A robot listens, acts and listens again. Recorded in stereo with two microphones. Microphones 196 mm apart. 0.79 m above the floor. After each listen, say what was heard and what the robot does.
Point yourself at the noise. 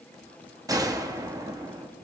The gunshot: about 20° right or 160° right. Turn 20° right.
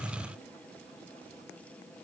Keep listening.
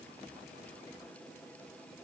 I heard a gunshot, but can't make it out now. It was about straight ahead or 140° right.